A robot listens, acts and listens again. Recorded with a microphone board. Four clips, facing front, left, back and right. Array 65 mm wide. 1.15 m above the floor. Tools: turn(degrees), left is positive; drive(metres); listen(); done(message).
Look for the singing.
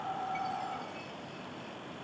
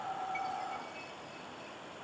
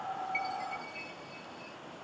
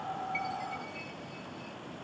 listen()
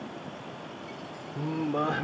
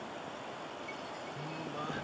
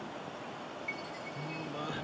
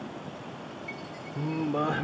turn(degrees=-45)
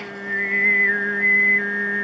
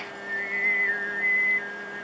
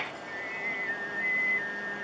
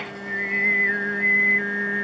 turn(degrees=-30)
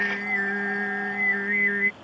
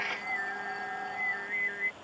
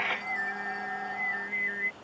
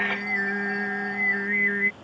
turn(degrees=-40)
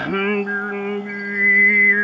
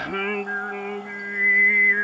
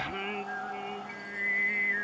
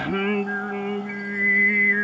turn(degrees=10)
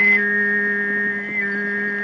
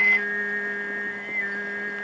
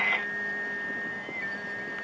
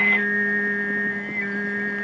done("Facing the singing.")